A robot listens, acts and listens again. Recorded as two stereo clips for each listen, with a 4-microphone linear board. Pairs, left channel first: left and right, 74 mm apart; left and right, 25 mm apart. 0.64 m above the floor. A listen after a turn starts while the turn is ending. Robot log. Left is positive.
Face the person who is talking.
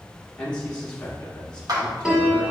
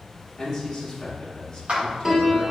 cmd yaw +30
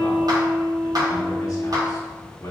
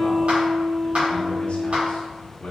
note: So it is at 135° left.
cmd yaw +135
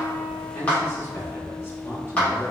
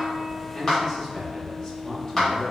note: The man speaking is now 40° left.
cmd yaw +40
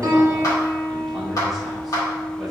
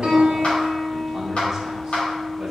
cmd idle
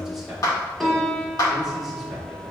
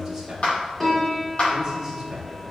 end: Facing the man speaking.